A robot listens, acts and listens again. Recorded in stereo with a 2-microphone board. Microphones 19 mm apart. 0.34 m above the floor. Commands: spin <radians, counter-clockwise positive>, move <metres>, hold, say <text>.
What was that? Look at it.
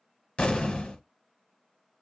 spin 1.13
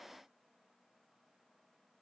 hold
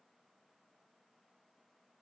say I heard an explosion, but can't make it out now. It was about straight ahead or 50° left.